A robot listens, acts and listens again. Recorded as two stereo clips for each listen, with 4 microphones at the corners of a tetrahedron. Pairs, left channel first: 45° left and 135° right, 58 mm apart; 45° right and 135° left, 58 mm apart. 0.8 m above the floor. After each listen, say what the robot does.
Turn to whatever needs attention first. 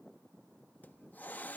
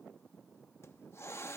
Keep listening.
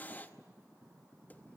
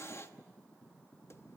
Keep listening.
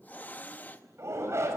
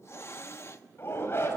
Turn 90° right.
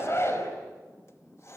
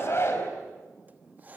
Found it: a shout, straight ahead.